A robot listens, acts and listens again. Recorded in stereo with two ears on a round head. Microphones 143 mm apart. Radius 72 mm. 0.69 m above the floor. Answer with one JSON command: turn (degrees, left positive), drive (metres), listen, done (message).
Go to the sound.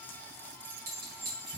{"turn": -70}
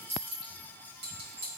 {"turn": -35}
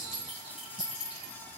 {"drive": 1.0}
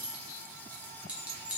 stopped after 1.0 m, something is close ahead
{"turn": -10}
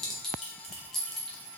{"done": "Arrived at the clink, straight ahead."}